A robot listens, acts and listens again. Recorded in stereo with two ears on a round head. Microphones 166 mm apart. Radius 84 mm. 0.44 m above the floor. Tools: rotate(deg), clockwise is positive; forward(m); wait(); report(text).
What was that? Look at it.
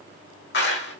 rotate(-60)
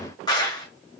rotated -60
rotate(-25)
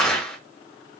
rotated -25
report("Facing the clap.")